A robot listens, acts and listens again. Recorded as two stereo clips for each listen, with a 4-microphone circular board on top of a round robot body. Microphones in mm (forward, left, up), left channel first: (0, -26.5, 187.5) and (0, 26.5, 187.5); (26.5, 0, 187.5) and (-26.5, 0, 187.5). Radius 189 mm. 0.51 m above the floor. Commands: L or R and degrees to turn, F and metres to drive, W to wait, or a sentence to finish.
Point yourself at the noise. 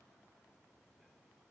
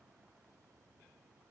W
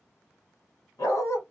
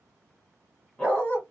R65
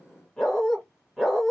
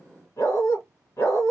Found it: a dog barking, straight ahead, 1 to 2 m away.